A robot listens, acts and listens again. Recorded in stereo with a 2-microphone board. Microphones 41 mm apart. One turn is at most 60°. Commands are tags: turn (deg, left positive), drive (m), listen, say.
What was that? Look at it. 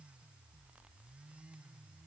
<listen/>
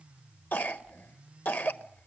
<turn deg="50"/>
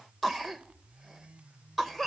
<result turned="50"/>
<say>Found it: a cough, straight ahead, 1 to 2 m away.</say>